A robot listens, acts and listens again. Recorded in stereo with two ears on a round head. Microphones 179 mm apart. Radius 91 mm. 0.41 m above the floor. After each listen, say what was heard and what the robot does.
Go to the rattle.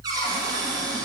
Keep listening.
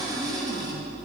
Keep listening.
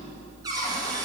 I can't make out a rattle to turn to.